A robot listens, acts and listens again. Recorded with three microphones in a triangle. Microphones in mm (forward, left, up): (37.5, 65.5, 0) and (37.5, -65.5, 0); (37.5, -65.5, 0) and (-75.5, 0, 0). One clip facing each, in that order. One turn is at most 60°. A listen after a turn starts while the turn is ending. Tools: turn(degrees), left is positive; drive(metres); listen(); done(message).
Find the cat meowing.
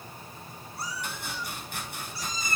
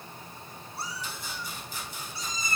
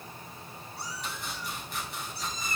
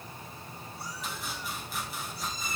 turn(degrees=-20)
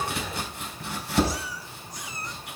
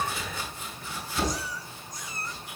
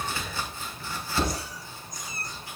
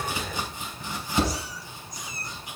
turn(degrees=15)
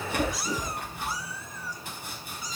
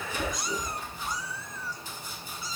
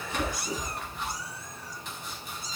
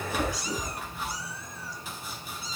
turn(degrees=15)
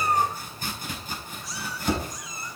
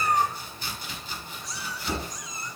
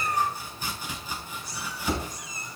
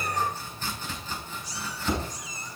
done("Facing the cat meowing, 2 to 4 m away.")